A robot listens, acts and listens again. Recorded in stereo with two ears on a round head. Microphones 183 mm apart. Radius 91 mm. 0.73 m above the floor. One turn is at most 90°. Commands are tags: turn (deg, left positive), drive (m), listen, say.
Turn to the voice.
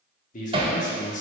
<turn deg="40"/>
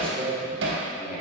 <say>Found it: a man speaking, straight ahead.</say>